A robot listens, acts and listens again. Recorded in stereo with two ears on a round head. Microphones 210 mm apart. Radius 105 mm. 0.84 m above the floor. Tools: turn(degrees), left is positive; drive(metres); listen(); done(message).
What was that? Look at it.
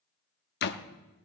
turn(degrees=45)
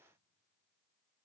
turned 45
listen()
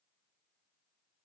done("I heard a door slam, but can't make it out now. It was about straight ahead or 90° left.")